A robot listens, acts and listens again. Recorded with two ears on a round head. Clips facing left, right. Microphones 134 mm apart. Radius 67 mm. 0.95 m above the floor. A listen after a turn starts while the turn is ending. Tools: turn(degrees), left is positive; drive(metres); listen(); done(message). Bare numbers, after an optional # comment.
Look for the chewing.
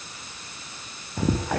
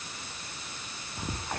# The chewing: about 60° left or 120° left.
turn(60)
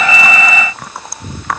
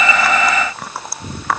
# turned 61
done("Facing the chewing.")